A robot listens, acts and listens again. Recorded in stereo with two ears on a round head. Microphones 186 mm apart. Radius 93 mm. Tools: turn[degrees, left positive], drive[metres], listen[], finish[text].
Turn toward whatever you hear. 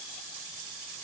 Action: listen[]
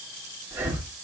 Action: turn[-30]
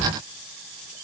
Action: listen[]
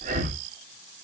Thought: So it is at 140° right.
Action: turn[-140]
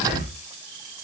Thought: The breathing is now 45° left.
Action: turn[45]
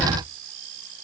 Thought: The breathing is now 10° left.
Action: turn[10]
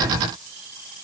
Action: listen[]
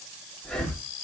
Action: finish[Facing the breathing.]